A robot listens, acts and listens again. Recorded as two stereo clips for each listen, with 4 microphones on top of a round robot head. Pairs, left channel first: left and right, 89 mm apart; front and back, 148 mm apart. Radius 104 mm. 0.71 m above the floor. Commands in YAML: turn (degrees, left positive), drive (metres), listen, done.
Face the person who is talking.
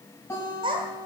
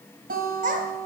turn: -135
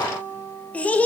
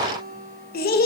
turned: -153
turn: 15
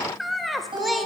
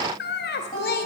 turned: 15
done: "Facing the child speaking."